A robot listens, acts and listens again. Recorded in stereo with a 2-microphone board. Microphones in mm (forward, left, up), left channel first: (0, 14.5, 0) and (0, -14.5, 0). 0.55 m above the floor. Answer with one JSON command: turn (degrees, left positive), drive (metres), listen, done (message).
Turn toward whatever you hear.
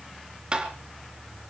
{"turn": -35}
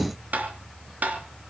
{"turn": -110}
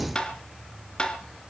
{"turn": 30}
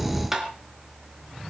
{"turn": -10}
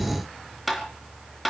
{"done": "Found it: tapping, straight ahead."}